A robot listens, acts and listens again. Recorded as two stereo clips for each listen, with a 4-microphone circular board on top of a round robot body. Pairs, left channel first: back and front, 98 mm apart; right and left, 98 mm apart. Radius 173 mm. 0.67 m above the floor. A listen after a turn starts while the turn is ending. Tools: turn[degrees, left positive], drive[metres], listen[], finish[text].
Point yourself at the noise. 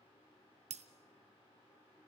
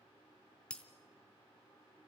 Thought: The breaking glass: 10° right.
Action: turn[-10]
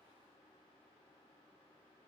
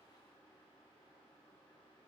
Action: finish[Facing where the breaking glass came from. I can't hear it now.]